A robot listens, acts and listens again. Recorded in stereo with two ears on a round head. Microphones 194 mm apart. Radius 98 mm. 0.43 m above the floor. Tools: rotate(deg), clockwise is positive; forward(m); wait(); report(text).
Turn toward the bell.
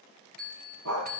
rotate(45)
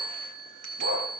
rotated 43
rotate(90)
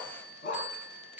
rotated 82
rotate(10)
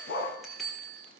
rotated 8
report("Found it: a bell, straight ahead.")